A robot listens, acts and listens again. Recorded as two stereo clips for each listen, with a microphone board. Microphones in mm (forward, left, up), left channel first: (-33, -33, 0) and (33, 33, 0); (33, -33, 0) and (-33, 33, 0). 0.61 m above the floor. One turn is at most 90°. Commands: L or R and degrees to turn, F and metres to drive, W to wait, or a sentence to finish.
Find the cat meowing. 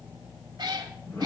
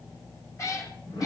L10
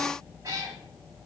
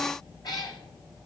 Found it: a cat meowing, straight ahead.